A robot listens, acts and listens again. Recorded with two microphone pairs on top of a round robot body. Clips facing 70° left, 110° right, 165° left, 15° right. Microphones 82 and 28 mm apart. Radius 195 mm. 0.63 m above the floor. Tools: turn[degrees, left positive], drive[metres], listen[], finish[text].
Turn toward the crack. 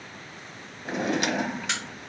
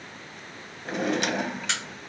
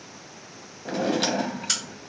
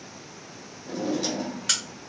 Thought: The crack: 20° right.
Action: turn[-20]
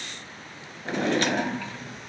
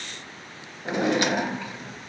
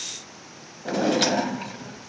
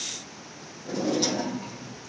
Action: finish[I heard a crack from this way, but can't make it out now.]